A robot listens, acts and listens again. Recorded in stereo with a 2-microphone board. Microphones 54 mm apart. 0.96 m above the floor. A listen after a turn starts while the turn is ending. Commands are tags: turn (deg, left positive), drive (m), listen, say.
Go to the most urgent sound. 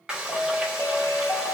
<turn deg="25"/>
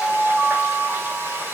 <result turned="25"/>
<drive m="1.0"/>
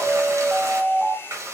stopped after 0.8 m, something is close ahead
<turn deg="10"/>
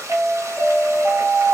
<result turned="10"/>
<say>I am next to the alarm.</say>